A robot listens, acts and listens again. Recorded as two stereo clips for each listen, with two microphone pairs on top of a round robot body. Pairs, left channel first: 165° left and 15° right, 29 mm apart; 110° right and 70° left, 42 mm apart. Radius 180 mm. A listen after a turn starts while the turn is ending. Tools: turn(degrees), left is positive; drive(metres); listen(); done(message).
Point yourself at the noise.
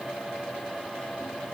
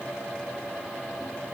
listen()
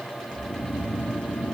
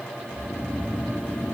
turn(degrees=-165)
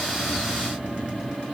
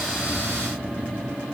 done("Found it: snoring, straight ahead.")